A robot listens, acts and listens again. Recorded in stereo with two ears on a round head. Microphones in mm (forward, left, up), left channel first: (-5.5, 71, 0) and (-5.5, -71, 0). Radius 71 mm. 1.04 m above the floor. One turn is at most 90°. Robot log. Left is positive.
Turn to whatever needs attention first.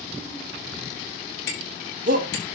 note: The shout: about 50° right or 130° right.
cmd yaw -50
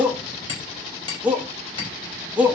note: So it is at 10° right.
cmd yaw -10
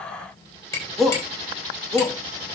end: Found it: a shout, straight ahead.